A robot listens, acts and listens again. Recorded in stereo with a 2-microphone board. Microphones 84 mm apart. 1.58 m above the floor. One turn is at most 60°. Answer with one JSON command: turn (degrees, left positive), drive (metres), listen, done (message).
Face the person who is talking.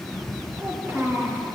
{"turn": -30}
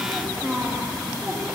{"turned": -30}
{"turn": -35}
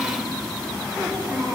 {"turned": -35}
{"turn": -30}
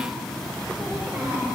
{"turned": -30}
{"listen": true}
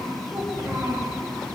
{"listen": true}
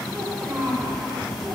{"turn": -20}
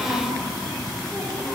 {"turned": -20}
{"listen": true}
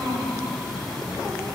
{"listen": true}
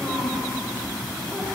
{"done": "I heard a child speaking, but can't make it out now. It was about straight ahead or 140° right."}